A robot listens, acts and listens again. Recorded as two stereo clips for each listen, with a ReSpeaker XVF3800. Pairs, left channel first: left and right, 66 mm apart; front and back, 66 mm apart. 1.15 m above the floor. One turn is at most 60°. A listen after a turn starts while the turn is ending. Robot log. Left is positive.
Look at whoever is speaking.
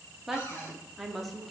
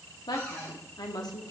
end: Found it: a woman speaking, straight ahead, 2 to 4 m away.